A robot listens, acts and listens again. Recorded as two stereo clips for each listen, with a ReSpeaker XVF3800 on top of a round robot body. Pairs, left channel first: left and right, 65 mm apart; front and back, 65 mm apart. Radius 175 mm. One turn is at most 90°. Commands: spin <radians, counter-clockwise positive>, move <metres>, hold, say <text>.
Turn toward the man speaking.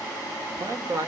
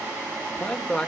spin -1.40
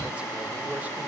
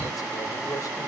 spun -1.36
hold
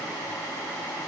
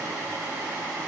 hold
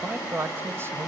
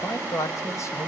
spin -0.61
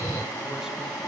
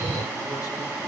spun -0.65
hold
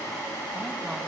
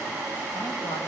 hold
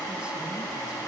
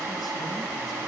say Facing where the man speaking came from. I can't hear it now.